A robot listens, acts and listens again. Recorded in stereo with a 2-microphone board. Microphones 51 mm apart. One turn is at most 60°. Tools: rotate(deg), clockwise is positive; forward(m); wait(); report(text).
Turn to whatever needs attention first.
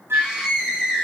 rotate(30)
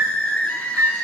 rotate(-15)
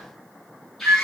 report("Found it: a scream, straight ahead, over 4 m away.")